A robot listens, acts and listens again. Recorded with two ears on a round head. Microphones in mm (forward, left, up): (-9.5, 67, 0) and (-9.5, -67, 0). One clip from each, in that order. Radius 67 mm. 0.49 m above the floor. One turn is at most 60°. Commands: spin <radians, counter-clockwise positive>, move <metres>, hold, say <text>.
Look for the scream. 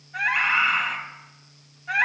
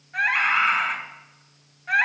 spin -0.52
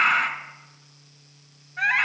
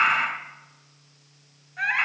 say Found it: a scream, straight ahead, 2 to 4 m away.